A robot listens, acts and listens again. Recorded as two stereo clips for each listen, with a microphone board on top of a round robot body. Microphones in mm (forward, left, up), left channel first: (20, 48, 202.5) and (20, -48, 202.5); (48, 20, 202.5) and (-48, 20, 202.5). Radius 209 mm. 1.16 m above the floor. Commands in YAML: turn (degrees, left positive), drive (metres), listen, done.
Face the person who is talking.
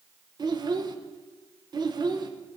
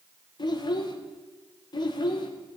turn: -45
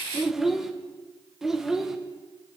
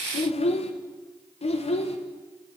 done: "Found it: a child speaking, straight ahead."